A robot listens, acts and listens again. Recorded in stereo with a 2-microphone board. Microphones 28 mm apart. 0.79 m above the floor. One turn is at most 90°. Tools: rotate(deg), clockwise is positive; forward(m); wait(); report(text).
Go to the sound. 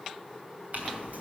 rotate(90)
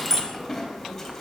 rotate(-10)
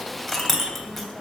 forward(1.0)
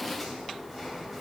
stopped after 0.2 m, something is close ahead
wait()
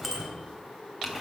report("Blocked. The clink is further on, straight ahead.")